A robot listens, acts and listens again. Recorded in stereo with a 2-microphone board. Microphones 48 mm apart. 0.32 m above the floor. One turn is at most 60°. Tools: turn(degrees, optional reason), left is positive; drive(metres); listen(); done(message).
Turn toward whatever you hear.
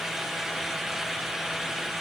listen()
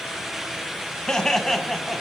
turn(degrees=30)
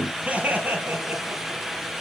turn(degrees=-40, reason="So it is at 40° right.")
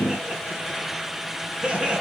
turn(degrees=-25, reason="The laughter is now 25° right.")
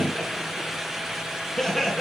done("Found it: laughter, straight ahead, 2 to 4 m away.")